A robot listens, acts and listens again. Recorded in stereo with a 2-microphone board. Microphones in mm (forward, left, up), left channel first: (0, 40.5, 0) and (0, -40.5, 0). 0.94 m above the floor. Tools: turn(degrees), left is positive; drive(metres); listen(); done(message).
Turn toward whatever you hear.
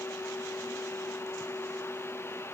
listen()
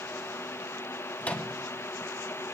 turn(degrees=20)
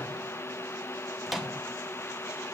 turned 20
done("Facing the microwave.")